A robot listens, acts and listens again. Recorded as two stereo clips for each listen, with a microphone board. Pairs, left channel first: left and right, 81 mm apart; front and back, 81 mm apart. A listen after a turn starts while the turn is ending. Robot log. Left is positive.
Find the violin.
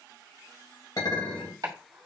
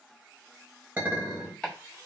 cmd idle
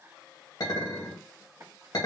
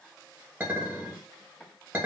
cmd idle
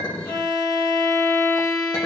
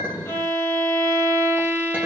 note: The violin: 55° left.
cmd yaw +55
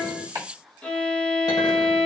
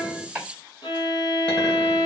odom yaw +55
note: The violin is now 15° left.
cmd yaw +15
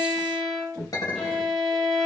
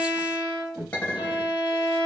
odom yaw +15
end: Found it: a violin, straight ahead, under 1 m away.